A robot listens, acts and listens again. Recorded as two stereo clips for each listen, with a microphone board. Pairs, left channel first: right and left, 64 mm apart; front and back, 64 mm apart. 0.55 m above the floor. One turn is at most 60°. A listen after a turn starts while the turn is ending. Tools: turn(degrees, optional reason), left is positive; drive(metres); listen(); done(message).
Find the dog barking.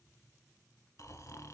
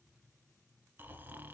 listen()
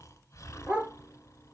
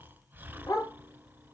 turn(degrees=20, reason="The dog barking: 20° left.")
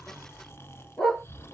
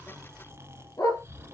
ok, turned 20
done("Facing the dog barking, 2 to 4 m away.")